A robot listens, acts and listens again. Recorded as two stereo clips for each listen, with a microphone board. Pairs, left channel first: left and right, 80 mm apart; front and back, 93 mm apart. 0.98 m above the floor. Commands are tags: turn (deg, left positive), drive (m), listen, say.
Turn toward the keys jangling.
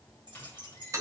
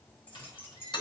<turn deg="-65"/>
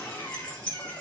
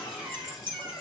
<turn deg="15"/>
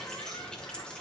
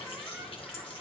<listen/>
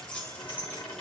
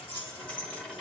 <turn deg="25"/>
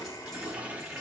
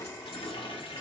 <listen/>
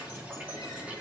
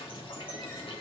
<listen/>
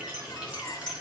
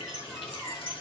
<turn deg="15"/>
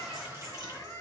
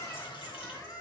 <listen/>
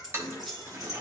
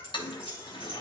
<say>Facing the keys jangling, 2 to 4 m away.</say>